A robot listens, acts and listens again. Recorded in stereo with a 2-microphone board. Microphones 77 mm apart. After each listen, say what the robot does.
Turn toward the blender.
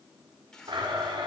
Turn 90° right.
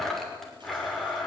Found it: a blender, straight ahead.